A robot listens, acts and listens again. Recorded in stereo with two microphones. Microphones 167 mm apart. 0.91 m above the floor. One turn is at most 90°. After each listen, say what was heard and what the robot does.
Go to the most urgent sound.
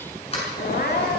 The crying: about 70° left or 110° left. Turn 70° left.
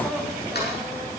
Drive 1.0 m forward.
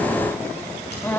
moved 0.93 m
The crying is now 10° left. Turn 10° left.
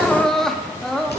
Drive 1.0 m forward.
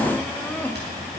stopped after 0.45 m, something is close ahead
The crying is now 15° left. Turn 15° left.
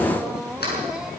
Arrived at the crying, straight ahead.